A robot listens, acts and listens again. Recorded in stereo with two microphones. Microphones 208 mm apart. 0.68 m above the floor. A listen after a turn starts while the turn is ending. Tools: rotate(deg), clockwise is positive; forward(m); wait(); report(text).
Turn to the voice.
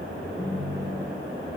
wait()
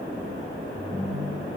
wait()
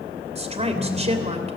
rotate(30)
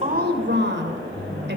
rotate(120)
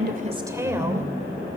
rotate(15)
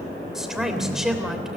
report("Facing the woman speaking.")